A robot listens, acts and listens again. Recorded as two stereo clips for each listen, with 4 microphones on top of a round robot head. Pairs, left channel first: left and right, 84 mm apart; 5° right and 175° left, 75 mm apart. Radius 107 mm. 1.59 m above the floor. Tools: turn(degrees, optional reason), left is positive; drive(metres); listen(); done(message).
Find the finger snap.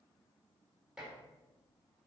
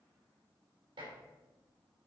listen()
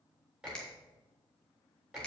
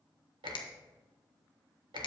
turn(degrees=10, reason="The finger snap: 10° left.")
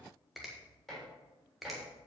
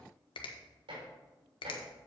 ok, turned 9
done("Found it: a finger snap, straight ahead, 1 to 2 m away.")